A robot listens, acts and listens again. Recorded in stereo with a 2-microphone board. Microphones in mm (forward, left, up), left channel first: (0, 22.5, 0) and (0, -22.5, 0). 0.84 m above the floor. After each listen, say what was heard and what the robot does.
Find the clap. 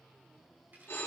Keep listening.
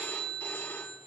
Keep listening.
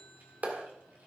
The clap: about 35° right or 145° right. Turn 35° right.
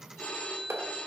So it is at 105° right. Turn 105° right.
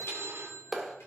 Facing the clap.